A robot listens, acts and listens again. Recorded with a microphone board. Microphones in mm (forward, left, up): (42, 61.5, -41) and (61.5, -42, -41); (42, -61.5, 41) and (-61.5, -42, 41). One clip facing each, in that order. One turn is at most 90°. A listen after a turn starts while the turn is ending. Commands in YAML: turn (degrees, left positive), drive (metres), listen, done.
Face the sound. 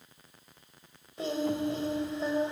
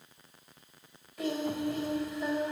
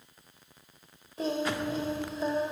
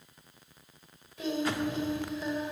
turn: 40
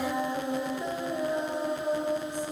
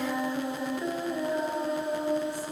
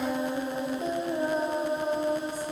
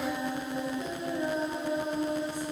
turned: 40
turn: 30
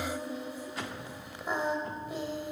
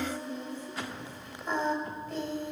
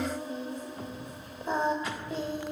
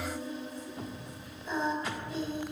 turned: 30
turn: 25
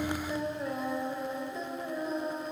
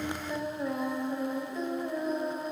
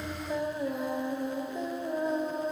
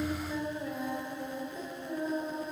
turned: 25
turn: 10
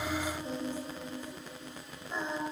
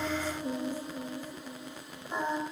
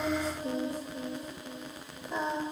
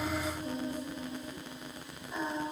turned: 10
done: "Found it: singing, straight ahead."